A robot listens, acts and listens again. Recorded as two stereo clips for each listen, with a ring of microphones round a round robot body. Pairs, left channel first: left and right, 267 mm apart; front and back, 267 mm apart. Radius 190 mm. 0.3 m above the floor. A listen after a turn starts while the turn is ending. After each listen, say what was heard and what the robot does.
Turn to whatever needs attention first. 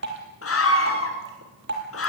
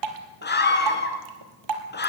The scream: 55° left. Turn 55° left.
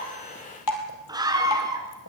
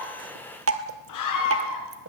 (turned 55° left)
The scream is now 15° right. Turn 15° right.
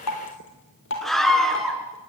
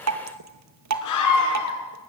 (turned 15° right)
Found it: a scream, straight ahead.